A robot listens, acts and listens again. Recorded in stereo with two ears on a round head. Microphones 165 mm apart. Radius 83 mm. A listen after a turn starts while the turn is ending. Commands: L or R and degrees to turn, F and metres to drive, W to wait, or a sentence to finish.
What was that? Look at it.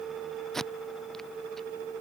L30
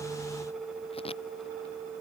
W
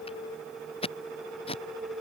L150
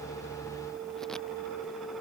W
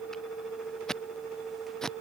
Facing the tape being pulled.